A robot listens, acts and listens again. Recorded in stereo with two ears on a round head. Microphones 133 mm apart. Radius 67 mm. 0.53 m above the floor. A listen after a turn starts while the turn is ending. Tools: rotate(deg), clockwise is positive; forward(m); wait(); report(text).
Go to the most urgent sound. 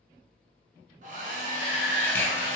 rotate(-60)
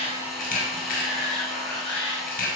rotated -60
rotate(-40)
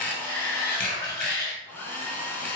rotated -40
rotate(-25)
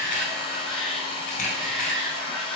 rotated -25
forward(1.0)
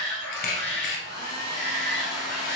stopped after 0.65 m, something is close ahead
report("Arrived at the shout, straight ahead.")